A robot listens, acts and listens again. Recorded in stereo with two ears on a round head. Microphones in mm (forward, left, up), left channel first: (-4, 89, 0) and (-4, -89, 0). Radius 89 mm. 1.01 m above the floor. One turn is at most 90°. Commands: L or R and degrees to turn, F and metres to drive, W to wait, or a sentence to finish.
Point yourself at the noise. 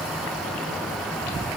W
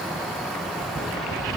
W
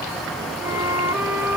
R30
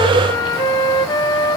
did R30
L20
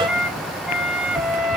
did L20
Facing the flute, 1 to 2 m away.